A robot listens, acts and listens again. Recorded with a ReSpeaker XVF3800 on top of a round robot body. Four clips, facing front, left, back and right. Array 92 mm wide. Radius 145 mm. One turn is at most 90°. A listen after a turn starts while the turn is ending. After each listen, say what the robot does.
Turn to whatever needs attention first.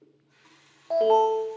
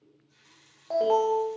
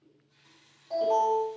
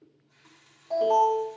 Turn 30° left.
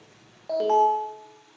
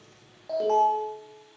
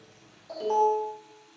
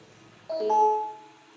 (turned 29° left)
Facing the alarm, 2 to 4 m away.